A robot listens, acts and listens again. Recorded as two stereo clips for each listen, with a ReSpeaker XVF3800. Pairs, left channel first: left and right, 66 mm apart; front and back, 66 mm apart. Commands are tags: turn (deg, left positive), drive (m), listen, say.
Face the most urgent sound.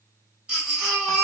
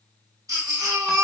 <turn deg="-165"/>
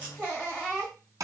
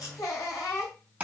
<turn deg="-25"/>
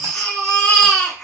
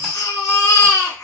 <say>Found it: a baby crying, straight ahead.</say>